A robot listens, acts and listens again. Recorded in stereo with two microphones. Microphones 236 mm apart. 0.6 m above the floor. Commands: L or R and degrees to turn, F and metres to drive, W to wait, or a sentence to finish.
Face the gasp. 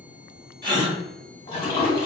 R20
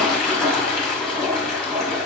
W
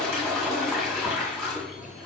I heard a gasp, but can't make it out now. It was about straight ahead or 140° right.